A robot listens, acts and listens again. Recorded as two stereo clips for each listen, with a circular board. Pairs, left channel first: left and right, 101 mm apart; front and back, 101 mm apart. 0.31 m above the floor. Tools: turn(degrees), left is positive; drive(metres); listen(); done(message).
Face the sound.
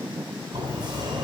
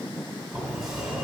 turn(degrees=-100)
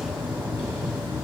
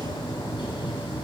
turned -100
done("Found it: a sliding door, straight ahead.")